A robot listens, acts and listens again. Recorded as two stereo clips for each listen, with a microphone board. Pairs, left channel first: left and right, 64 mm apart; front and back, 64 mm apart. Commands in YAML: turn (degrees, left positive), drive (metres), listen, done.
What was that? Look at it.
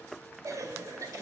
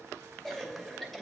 turn: -85
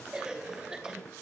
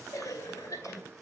turn: -15
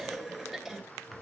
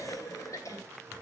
done: "Found it: a cough, straight ahead, 2 to 4 m away."